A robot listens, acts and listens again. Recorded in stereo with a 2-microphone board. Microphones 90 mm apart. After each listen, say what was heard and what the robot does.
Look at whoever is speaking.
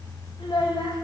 Turn 90° left.
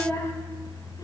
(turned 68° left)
So it is at 30° left. Turn 30° left.
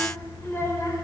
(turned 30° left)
The child speaking is now 35° left. Turn 35° left.
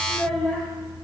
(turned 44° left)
Found it: a child speaking, straight ahead, 2 to 4 m away.